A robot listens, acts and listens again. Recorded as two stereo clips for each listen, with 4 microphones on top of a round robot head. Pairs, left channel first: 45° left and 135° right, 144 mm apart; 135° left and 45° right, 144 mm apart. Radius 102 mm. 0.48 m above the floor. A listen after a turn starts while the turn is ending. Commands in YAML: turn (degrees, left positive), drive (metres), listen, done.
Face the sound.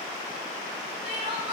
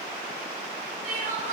turn: -85
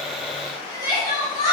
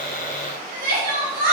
turn: -20
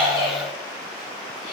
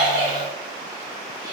turn: -10
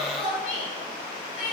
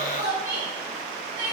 done: "Found it: crying, straight ahead, 2 to 4 m away."